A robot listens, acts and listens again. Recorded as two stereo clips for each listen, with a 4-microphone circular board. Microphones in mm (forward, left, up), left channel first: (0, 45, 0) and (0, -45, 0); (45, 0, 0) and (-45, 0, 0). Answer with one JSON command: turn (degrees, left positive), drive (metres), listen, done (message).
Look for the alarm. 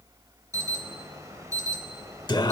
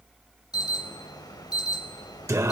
{"turn": -40}
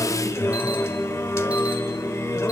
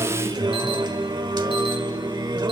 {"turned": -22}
{"turn": -15}
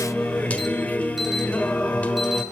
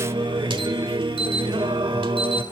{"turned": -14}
{"listen": true}
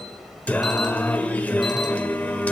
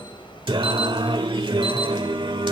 {"done": "I heard an alarm from this way, but can't make it out now."}